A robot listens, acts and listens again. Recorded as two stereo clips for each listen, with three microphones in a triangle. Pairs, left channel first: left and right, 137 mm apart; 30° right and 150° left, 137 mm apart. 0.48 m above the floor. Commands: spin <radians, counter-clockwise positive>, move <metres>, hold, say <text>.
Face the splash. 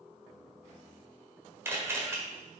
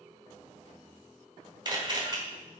hold
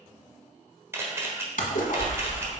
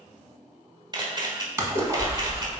spin 1.40
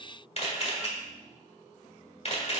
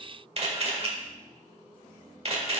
say Facing where the splash came from. I can't hear it now.